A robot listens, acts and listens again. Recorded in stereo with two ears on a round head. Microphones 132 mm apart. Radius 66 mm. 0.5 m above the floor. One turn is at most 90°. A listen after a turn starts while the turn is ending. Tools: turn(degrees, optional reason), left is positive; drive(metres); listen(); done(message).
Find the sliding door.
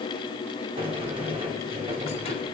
turn(degrees=-35, reason="The sliding door: about 35° right or 145° right.")
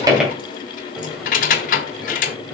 done("Facing the sliding door.")